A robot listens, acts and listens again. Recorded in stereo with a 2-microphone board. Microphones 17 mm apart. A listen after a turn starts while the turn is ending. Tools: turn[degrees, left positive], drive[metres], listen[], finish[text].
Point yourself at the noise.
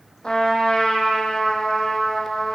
Thought: The trumpet: about 60° left or 120° left.
Action: turn[60]
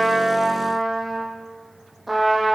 Action: finish[Found it: a trumpet, straight ahead, over 4 m away.]